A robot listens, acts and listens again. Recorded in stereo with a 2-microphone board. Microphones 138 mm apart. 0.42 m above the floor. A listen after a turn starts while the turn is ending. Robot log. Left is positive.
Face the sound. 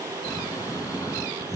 note: The snoring: about 25° left or 155° left.
cmd yaw +25
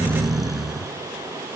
end: Found it: snoring, straight ahead.